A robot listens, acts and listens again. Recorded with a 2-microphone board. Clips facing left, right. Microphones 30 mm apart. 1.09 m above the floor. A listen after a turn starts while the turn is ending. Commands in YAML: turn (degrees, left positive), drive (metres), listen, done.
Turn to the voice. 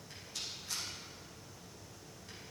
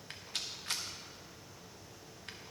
listen: true
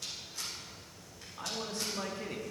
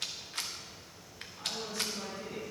turn: 70
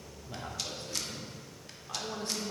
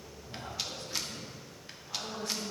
turn: 60
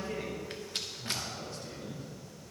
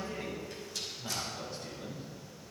turn: -10
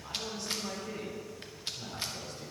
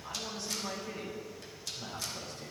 done: "Found it: a man speaking, straight ahead."